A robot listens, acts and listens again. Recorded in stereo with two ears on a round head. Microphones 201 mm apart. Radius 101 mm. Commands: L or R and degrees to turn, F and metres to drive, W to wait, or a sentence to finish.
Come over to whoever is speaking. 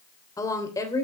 L15
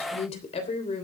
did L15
L150
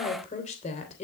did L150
L35
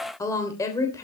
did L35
L15
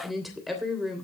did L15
F1.0
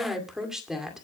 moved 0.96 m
F1.0
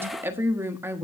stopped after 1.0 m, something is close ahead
R15
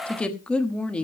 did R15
I am next to the woman speaking.